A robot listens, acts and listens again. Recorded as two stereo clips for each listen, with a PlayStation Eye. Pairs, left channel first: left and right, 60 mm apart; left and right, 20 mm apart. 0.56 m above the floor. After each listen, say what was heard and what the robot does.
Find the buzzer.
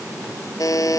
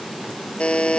The buzzer: about 65° left or 115° left. Turn 65° left.
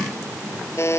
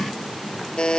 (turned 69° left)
So it is at 45° left. Turn 45° left.
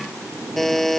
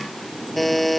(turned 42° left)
Found it: a buzzer, straight ahead.